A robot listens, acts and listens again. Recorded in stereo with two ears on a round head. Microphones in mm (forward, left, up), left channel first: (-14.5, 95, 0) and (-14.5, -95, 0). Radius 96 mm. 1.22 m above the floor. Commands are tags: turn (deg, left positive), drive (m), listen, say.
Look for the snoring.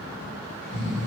<turn deg="35"/>
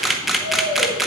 <turn deg="110"/>
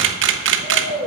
<say>Facing the snoring, over 4 m away.</say>